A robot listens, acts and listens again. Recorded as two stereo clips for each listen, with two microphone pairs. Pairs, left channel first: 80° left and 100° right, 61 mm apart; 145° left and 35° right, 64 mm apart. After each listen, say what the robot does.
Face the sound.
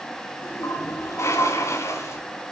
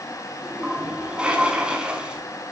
Turn 45° left.
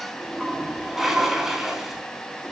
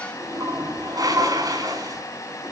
Turn 15° right.
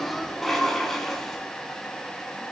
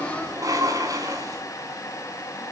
Facing the toilet flushing, over 4 m away.